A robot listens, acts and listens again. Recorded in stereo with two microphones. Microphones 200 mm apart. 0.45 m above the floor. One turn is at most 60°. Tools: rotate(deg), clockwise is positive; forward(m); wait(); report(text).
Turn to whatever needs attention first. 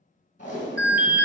rotate(50)
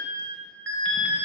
rotate(60)
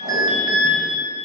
rotate(25)
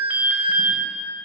rotate(10)
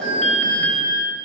report("Facing the alarm, 1 to 2 m away.")